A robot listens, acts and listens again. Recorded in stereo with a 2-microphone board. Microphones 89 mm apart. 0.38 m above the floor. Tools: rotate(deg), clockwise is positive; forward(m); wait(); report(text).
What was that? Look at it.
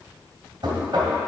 rotate(60)
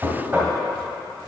rotate(30)
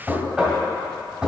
rotate(15)
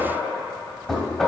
report("Found it: knocking, straight ahead, 1 to 2 m away.")